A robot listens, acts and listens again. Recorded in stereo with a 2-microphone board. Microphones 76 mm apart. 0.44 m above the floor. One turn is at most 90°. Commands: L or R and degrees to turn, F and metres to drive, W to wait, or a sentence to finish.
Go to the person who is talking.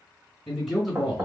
L30
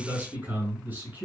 R25
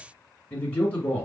L20
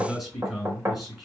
F1.0
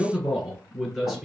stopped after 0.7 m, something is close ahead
Arrived at the man speaking, straight ahead.